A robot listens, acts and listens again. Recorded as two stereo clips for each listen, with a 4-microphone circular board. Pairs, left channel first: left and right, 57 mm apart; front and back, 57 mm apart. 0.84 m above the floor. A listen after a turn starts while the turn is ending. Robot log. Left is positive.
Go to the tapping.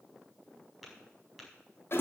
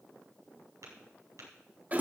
note: The tapping: straight behind.
cmd yaw +180
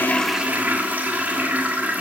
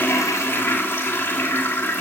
cmd idle
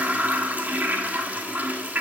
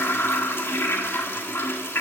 cmd idle
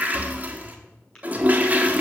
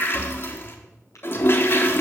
note: The tapping is now 20° left.
cmd yaw +20
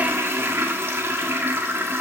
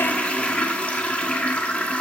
cmd idle
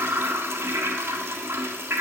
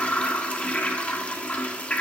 cmd idle
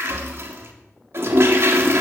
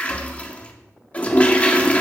end: I heard tapping from this way, but can't make it out now. I did not reach it.